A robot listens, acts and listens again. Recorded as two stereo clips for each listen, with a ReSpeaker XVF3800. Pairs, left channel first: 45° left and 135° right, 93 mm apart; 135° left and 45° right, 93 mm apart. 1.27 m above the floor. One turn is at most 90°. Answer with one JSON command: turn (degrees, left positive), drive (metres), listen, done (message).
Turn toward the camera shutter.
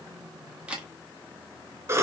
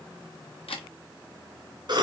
{"turn": 90}
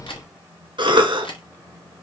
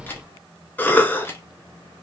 {"turn": 70}
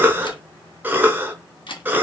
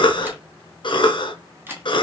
{"turn": 25}
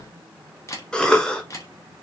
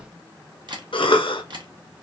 {"turn": -10}
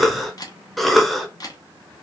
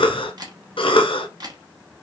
{"done": "Found it: a camera shutter, straight ahead."}